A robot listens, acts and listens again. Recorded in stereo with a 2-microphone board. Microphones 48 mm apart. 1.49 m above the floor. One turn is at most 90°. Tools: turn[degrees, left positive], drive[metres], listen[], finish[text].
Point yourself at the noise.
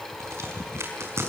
Thought: The crack: about 70° right or 110° right.
Action: turn[-70]
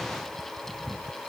Action: listen[]
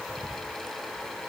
Action: finish[I heard a crack, but can't make it out now. It was about straight ahead or 40° right.]